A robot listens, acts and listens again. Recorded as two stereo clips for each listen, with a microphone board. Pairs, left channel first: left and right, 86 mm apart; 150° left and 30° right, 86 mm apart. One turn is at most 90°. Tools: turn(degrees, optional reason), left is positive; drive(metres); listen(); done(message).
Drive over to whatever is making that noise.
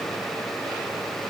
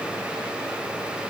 listen()
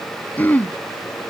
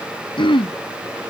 turn(degrees=90, reason="The throat clearing: 160° left.")
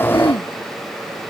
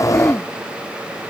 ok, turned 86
turn(degrees=75, reason="Nothing new. It was at 75° left.")
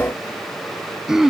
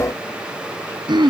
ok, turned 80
drive(metres=1.0)
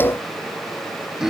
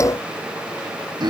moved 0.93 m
drive(metres=1.0)
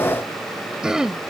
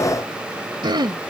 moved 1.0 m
turn(degrees=-10, reason="The throat clearing is now 10° right.")
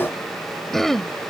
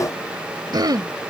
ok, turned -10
drive(metres=1.0)
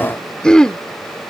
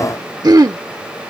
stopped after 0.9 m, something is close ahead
turn(degrees=10, reason="The throat clearing is now 10° left.")
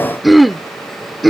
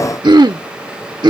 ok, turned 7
done("I am next to the throat clearing.")